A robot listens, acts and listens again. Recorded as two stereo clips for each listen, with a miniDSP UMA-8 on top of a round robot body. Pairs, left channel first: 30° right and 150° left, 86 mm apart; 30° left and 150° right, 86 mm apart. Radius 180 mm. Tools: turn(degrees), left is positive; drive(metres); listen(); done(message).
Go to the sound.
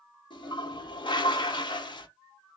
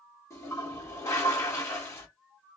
turn(degrees=-25)
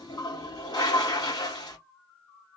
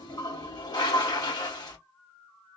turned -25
drive(metres=1.0)
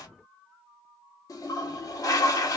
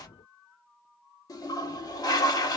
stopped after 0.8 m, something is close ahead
done("I am next to the toilet flushing.")